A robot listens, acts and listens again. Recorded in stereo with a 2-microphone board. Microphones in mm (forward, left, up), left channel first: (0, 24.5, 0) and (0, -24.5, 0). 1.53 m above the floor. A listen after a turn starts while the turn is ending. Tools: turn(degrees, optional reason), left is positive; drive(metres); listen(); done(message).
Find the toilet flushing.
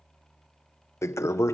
turn(degrees=90)
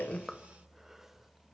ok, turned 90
listen()
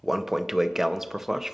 turn(degrees=-10, reason="The toilet flushing is now 10° right.")
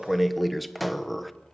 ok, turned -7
done("Found it: a toilet flushing, straight ahead, under 1 m away.")